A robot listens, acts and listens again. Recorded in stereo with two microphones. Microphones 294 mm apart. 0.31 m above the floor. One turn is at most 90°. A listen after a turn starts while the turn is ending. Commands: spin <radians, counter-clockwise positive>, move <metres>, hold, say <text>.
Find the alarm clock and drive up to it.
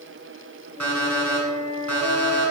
spin -1.22
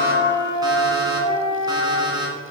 spin -0.26
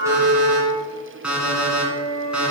move 1.0
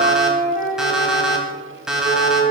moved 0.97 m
move 1.0
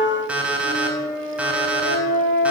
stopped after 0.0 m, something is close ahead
say I am next to the alarm clock.